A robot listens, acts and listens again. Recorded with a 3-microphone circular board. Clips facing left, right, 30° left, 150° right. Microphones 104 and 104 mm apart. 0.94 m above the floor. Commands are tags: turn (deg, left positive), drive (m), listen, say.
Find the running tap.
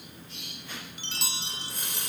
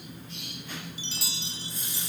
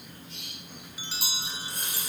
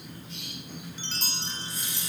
<turn deg="65"/>
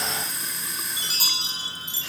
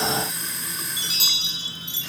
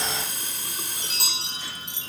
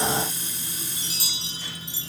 <say>Found it: a running tap, straight ahead.</say>